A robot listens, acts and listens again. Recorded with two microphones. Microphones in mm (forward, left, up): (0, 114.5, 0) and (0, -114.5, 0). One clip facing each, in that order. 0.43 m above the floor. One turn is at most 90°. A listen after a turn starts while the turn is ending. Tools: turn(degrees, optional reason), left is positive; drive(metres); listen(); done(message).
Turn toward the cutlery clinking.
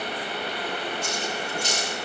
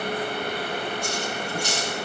turn(degrees=-30)
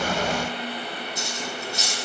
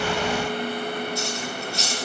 turn(degrees=20, reason="So it is at 20° left.")
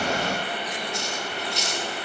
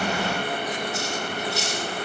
done("Facing the cutlery clinking, over 4 m away.")